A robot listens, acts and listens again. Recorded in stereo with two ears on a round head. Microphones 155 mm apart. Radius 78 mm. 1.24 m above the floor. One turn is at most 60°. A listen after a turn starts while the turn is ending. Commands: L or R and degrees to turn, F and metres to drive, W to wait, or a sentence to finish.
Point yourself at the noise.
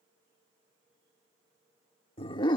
L25
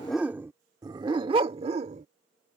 R40
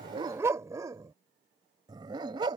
R25
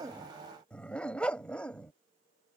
Found it: a dog barking, straight ahead.